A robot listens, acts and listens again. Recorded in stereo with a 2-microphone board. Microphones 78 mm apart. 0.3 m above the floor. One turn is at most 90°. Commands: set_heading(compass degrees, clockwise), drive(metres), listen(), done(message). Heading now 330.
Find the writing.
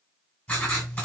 set_heading(310)
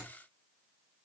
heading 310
listen()
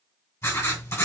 set_heading(220)
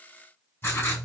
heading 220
set_heading(185)
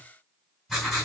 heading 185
done("Facing the writing, 1 to 2 m away.")